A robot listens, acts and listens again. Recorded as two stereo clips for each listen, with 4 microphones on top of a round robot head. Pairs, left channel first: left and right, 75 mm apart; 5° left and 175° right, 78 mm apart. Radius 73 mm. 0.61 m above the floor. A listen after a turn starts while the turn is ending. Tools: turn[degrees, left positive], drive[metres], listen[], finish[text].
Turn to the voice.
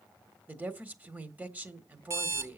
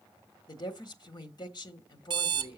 Thought: The woman speaking: 25° right.
Action: turn[-25]
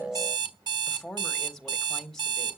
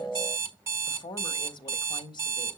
Thought: The woman speaking is now 10° left.
Action: turn[10]
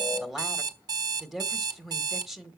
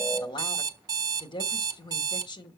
Action: finish[Found it: a woman speaking, straight ahead, 1 to 2 m away.]